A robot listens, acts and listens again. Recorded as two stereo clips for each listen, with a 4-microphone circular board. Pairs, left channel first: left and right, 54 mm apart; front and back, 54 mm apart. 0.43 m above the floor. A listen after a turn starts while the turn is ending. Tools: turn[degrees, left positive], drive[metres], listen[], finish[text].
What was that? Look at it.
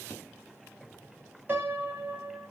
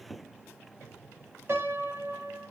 Thought: The piano: 145° right.
Action: turn[-145]
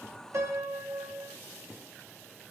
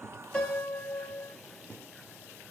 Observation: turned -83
Thought: The piano is now 60° right.
Action: turn[-60]
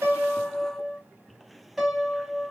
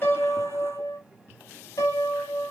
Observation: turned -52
Action: finish[Facing the piano, under 1 m away.]